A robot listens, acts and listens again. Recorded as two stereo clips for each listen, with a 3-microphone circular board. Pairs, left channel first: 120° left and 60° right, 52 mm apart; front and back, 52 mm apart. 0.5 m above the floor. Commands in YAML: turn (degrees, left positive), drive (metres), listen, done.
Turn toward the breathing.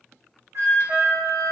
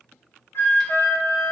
listen: true
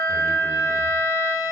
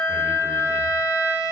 listen: true
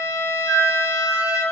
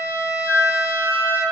done: "I can't make out breathing to turn to."